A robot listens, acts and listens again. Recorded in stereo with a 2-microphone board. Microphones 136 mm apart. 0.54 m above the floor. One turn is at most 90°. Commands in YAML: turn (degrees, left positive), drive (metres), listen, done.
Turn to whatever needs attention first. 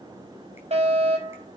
turn: -50
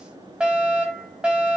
done: "Facing the fire alarm, over 4 m away."